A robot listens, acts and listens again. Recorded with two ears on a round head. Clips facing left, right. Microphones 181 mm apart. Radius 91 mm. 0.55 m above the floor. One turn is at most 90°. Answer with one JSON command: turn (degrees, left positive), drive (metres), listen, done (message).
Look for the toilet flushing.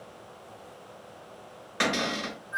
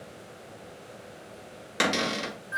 {"listen": true}
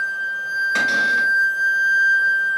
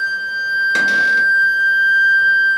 {"listen": true}
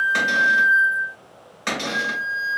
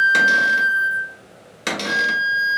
{"done": "I can't make out a toilet flushing to turn to."}